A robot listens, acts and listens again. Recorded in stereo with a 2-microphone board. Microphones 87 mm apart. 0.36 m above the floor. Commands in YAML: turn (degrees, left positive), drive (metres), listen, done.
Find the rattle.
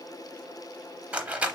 turn: -30
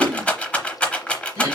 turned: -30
turn: 15
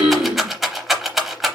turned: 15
done: "Facing the rattle."